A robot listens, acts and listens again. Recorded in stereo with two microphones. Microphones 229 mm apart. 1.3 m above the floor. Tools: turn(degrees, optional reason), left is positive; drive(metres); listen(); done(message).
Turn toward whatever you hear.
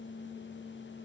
listen()
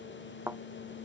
turn(degrees=-30)
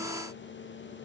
listen()
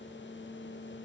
done("I heard a thud, but can't make it out now. It was about 20° left or 140° right.")